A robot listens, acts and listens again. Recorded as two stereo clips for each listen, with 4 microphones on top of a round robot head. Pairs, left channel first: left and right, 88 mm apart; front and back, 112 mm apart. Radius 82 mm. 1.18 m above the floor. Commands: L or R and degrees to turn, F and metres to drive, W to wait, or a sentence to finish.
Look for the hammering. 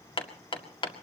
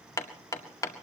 L65
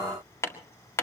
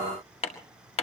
L30
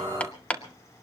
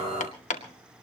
L15
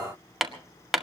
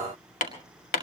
Found it: hammering, straight ahead, 2 to 4 m away.